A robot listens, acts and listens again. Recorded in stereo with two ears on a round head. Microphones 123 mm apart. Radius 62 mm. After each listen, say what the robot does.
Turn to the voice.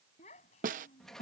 Turn 50° left.
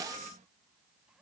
Keep listening.
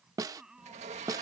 Found it: a child speaking, straight ahead.